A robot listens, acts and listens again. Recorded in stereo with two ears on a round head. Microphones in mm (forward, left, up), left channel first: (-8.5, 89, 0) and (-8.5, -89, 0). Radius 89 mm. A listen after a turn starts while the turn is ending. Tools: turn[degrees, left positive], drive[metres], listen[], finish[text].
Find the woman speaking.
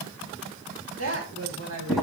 Action: turn[-90]
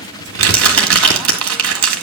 Action: listen[]
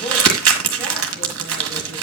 Action: listen[]
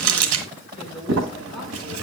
Action: finish[I heard a woman speaking from this way, but can't make it out now.]